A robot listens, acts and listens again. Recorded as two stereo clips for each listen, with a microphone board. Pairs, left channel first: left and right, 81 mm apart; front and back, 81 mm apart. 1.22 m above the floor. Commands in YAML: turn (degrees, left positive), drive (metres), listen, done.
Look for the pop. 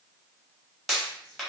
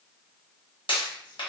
done: "Found it: a pop, straight ahead."